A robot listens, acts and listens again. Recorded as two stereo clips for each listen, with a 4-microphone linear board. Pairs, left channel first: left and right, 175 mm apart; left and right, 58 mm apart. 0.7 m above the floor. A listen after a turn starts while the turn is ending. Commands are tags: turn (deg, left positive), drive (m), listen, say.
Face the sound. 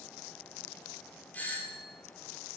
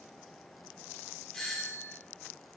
<turn deg="30"/>
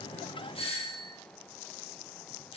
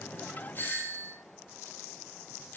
<turn deg="140"/>
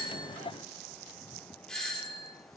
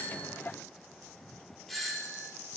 <say>Facing the doorbell.</say>